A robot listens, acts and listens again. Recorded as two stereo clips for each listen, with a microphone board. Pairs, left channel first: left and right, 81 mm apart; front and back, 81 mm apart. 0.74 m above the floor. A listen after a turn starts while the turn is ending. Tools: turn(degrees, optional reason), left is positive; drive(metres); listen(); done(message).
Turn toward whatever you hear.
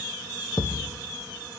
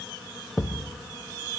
turn(degrees=80, reason="The thud: 80° left.")
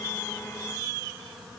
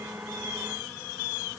done("I heard a thud from this way, but can't make it out now.")